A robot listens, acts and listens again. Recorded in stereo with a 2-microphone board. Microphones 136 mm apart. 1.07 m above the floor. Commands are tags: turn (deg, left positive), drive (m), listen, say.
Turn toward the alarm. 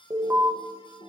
<turn deg="-20"/>
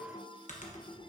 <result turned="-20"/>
<listen/>
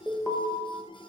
<say>Found it: an alarm, straight ahead.</say>